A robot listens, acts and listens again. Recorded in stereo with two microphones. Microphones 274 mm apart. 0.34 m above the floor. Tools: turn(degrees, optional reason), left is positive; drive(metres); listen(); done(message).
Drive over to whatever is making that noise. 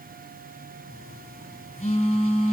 turn(degrees=25, reason="The phone buzzing: about 25° left or 155° left.")
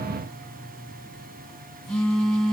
drive(metres=1.0)
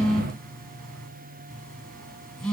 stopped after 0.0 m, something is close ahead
done("Blocked. The phone buzzing is further on, straight ahead.")